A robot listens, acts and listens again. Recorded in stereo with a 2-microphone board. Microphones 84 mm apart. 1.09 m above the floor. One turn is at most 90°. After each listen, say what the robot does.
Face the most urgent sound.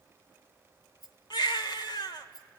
Turn 60° left.
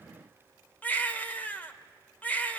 Turn 20° left.
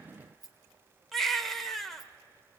Found it: a baby crying, straight ahead.